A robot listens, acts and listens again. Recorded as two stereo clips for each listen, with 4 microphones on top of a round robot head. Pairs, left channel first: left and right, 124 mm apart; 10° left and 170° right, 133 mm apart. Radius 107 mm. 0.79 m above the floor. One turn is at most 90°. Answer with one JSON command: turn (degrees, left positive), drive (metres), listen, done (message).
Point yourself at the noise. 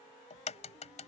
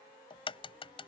{"turn": 60}
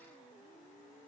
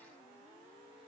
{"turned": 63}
{"done": "I heard a crack from this way, but can't make it out now."}